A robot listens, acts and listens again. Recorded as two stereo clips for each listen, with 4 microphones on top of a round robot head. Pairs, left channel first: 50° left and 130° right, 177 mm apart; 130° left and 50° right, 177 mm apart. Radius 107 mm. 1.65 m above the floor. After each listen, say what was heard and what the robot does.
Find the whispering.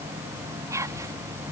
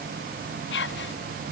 The whispering: 155° left. Turn 155° left.
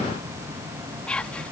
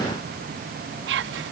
The whispering is now 35° right. Turn 35° right.
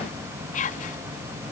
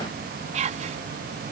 Facing the whispering.